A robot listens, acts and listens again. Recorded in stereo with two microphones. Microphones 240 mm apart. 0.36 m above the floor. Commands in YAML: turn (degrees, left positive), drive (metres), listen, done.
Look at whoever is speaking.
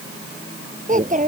turn: -30
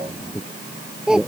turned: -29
done: "Found it: a child speaking, straight ahead."